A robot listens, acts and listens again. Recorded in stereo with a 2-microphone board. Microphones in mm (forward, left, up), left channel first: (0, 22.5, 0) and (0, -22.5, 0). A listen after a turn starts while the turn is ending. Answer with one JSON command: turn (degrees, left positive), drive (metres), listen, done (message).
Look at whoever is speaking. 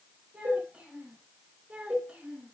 {"turn": -25}
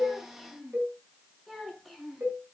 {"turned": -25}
{"done": "Found it: a child speaking, straight ahead."}